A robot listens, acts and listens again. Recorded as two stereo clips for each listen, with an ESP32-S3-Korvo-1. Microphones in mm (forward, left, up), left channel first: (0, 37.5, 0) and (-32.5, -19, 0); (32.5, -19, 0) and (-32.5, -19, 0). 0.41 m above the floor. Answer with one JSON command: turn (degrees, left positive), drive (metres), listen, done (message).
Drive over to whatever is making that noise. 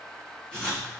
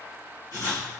{"drive": 1.0}
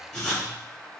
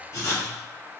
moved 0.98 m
{"turn": -15}
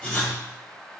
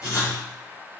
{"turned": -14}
{"drive": 1.0}
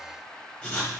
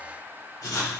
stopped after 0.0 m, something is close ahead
{"done": "Arrived at the writing, straight ahead."}